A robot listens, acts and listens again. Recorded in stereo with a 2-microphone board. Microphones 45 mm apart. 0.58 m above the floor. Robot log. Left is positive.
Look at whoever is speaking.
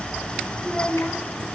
note: The child speaking: about 30° left or 150° left.
cmd yaw +30
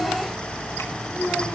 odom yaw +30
note: So it is at 125° left.
cmd yaw +125
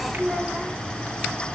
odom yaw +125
end: Facing the child speaking.